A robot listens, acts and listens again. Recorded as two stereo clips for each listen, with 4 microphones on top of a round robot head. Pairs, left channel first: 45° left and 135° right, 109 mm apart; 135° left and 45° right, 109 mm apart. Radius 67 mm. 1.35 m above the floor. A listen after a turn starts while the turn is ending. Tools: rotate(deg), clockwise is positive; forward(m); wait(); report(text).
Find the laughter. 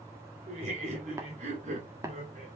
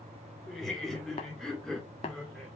rotate(140)
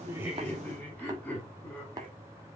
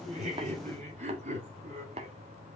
rotate(30)
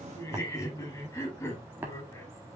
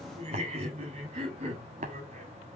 rotate(20)
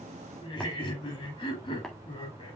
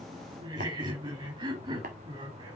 report("Found it: laughter, straight ahead.")